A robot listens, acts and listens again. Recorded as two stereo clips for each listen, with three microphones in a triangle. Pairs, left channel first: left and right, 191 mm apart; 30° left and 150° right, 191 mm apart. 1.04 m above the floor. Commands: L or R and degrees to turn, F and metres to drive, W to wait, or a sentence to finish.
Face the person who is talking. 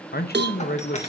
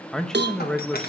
L115
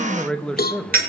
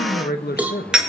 Facing the man speaking.